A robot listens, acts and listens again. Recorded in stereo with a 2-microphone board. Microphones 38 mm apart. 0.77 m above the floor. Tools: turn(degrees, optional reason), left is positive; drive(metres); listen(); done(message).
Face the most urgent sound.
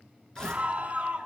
turn(degrees=-40, reason="The scream: about 40° right or 140° right.")
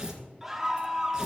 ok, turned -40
done("Found it: a scream, straight ahead, 1 to 2 m away.")